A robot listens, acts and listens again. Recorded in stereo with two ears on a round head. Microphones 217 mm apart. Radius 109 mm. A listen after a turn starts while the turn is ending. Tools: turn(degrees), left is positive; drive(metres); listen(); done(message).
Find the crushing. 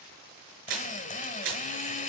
turn(degrees=-60)
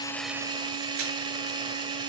listen()
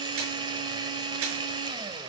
listen()
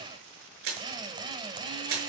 turn(degrees=-60)
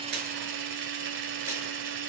listen()
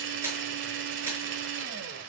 turn(degrees=-10)
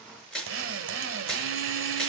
done("Found it: crushing, straight ahead.")